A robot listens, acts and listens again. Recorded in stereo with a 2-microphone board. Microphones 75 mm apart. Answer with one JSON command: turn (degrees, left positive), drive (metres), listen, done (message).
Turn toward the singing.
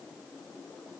{"listen": true}
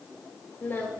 {"turn": 30}
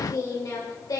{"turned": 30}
{"turn": 120}
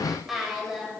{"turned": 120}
{"done": "Found it: singing, straight ahead, over 4 m away."}